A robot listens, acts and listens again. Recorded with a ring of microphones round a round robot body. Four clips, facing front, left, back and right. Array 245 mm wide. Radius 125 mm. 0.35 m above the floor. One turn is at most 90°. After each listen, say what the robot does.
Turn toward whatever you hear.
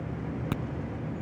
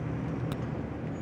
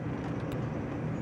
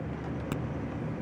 Turn 15° right.
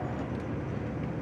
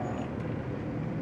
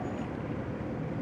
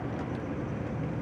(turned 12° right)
I heard a crack from this way, but can't make it out now.